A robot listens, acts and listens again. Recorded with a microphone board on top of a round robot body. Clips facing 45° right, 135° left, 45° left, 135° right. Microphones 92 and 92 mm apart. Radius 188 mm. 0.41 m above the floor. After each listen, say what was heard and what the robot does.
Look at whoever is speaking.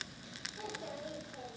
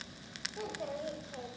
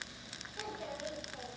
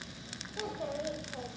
The child speaking: 160° left. Turn 160° left.
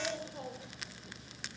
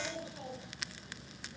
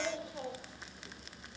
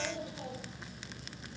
The child speaking is now 10° left. Turn 10° left.
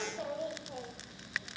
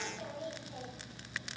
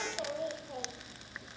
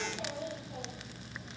Facing the child speaking.